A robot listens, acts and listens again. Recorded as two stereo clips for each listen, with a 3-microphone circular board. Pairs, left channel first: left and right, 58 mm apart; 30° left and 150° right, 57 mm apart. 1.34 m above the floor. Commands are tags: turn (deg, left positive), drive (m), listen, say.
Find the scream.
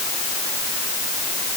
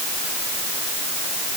<listen/>
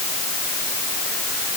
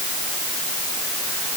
<listen/>
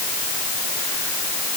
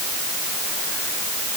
<say>I can't make out a scream to turn to.</say>